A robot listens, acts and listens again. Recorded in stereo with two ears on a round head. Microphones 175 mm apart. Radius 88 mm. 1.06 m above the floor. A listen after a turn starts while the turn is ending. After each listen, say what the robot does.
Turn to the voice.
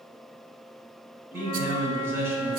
Turn 30° right.
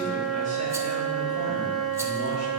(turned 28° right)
Keep listening.
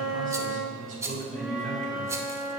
Turn 140° right.
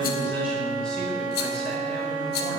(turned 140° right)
Keep listening.
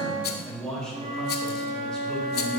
Facing the man speaking, 2 to 4 m away.